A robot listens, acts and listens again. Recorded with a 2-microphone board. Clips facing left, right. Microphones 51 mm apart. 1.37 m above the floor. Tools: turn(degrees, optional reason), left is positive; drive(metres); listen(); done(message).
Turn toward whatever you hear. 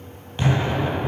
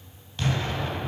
turn(degrees=25, reason="The explosion: about 25° left or 155° left.")
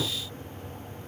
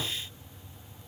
done("Found it: an explosion, straight ahead, 2 to 4 m away.")